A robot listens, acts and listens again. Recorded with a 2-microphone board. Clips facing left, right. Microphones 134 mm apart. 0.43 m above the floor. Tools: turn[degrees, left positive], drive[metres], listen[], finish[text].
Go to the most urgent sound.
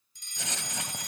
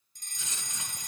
Thought: The fire alarm: about 45° right or 135° right.
Action: turn[-45]
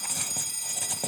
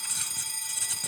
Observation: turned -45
Thought: So it is at 80° right.
Action: turn[-80]
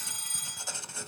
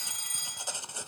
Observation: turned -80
Action: drive[1.0]
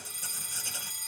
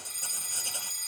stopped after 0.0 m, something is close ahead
Action: finish[Blocked. The fire alarm is further on, straight ahead.]